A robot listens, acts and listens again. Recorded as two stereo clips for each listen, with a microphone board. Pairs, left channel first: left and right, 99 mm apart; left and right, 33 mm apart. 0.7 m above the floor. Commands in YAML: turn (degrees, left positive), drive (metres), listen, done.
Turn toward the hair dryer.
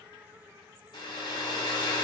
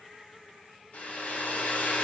turn: 50
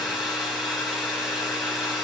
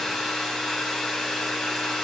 done: "Found it: a hair dryer, straight ahead, 2 to 4 m away."